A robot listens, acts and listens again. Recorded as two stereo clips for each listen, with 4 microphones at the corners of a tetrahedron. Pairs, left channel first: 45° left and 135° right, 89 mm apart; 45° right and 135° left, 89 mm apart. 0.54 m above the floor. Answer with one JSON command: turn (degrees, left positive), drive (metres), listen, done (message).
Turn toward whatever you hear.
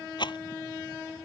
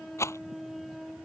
{"turn": 15}
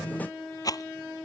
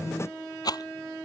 {"done": "Found it: a rattle, straight ahead."}